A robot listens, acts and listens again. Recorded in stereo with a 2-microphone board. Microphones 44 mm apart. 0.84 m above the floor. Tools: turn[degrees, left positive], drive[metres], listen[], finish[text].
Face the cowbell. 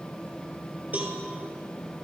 Thought: The cowbell: about 35° right or 145° right.
Action: turn[-35]
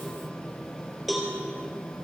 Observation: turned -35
Action: finish[Found it: a cowbell, straight ahead.]